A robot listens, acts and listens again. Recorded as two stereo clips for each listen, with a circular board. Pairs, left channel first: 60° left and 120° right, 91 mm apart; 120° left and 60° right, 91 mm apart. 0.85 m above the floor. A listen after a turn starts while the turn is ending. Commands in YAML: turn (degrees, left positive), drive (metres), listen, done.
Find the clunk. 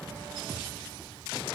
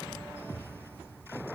listen: true
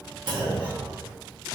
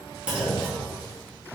turn: -140
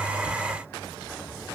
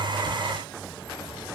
done: "Facing where the clunk came from. I can't hear it now."